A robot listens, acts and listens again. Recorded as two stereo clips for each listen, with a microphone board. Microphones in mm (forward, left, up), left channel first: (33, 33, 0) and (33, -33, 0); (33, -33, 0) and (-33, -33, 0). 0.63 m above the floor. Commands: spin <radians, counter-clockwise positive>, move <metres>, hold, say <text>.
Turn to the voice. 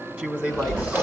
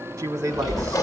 spin -2.71
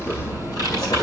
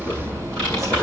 hold
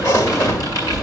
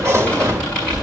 hold
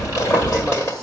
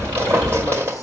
say I heard a man speaking from this way, but can't make it out now.